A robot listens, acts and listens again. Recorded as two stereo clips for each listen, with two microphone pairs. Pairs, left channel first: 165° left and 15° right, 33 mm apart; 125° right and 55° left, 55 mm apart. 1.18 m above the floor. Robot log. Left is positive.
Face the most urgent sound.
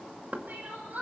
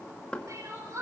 note: The crying: 25° left.
cmd yaw +25
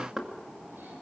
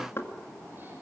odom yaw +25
cmd idle
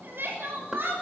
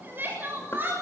end: Facing the crying, over 4 m away.